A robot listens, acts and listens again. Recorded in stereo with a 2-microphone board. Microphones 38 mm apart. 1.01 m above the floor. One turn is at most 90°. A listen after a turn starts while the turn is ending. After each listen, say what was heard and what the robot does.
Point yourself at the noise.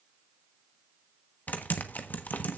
The typing on a keyboard: about 55° left or 125° left. Turn 55° left.
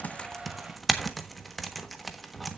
Facing the typing on a keyboard.